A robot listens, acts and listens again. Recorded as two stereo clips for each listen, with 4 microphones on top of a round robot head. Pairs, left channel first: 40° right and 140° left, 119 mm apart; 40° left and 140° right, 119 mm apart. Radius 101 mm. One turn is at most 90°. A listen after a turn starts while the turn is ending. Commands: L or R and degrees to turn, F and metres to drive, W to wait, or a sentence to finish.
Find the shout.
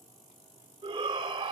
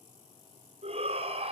R90
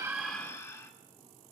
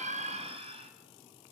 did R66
R90
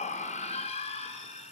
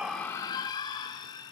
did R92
R10
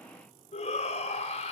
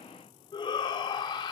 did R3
Facing the shout, 1 to 2 m away.